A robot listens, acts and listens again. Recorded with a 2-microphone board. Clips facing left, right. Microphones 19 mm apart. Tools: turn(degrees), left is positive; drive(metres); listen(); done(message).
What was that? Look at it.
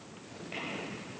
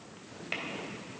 turn(degrees=-45)
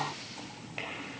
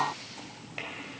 listen()
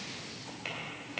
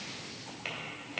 done("Facing the tapping, 2 to 4 m away.")